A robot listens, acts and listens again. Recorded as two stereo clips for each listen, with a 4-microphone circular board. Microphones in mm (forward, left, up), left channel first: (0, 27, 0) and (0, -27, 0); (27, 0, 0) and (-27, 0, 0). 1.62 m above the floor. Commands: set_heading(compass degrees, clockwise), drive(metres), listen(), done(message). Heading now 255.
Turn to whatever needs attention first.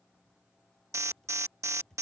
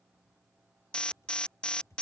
set_heading(325)
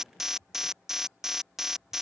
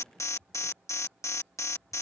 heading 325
done("Found it: an alarm, straight ahead.")